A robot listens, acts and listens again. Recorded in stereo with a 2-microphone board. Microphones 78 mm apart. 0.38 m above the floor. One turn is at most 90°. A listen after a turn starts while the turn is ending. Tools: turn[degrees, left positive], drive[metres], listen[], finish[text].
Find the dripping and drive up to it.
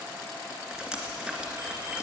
Action: turn[-30]
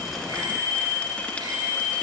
Action: listen[]
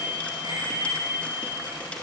Action: listen[]
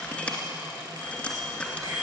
Thought: So it is at 20° left.
Action: turn[20]
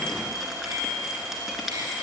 Action: drive[1.0]
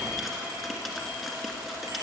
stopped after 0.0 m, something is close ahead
Action: finish[Blocked. The dripping is further on, straight ahead.]